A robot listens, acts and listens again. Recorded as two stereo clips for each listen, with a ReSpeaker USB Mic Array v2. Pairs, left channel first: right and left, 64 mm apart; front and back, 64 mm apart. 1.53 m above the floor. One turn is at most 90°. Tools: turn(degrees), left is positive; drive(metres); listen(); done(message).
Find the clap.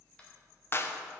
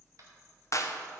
turn(degrees=-40)
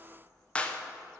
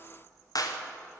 turn(degrees=-20)
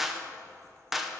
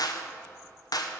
done("Facing the clap, under 1 m away.")